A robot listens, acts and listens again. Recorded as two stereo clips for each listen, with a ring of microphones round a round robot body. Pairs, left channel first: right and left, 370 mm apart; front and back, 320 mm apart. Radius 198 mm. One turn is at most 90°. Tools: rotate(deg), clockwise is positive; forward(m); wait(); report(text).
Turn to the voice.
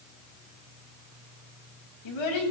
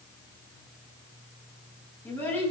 rotate(85)
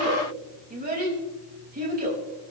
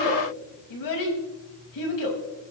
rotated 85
rotate(-20)
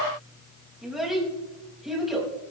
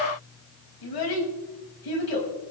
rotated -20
report("Facing the child speaking, over 4 m away.")